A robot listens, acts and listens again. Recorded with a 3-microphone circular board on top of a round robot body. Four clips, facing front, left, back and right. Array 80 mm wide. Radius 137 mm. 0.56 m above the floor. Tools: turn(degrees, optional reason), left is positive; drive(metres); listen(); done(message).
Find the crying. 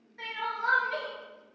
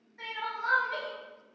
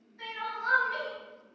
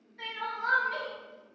turn(degrees=25, reason="The crying: 25° left.")
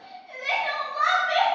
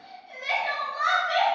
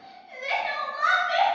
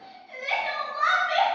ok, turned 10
turn(degrees=15, reason="The crying is now 15° left.")
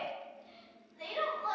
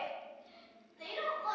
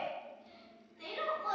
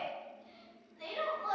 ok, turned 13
done("Facing the crying, 1 to 2 m away.")